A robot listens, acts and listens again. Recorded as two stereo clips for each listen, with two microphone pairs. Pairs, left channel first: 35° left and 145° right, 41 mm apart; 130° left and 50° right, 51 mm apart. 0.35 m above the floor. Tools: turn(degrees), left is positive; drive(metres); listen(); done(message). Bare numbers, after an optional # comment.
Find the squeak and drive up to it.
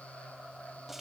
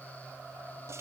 listen()
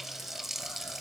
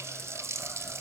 listen()
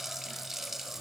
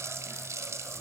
done("I can't make out a squeak to turn to.")